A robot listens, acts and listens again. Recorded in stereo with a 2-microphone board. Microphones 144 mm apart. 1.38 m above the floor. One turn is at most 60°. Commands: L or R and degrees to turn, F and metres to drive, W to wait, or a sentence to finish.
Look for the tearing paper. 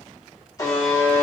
W
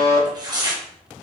R30
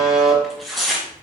Found it: tearing paper, straight ahead, 1 to 2 m away.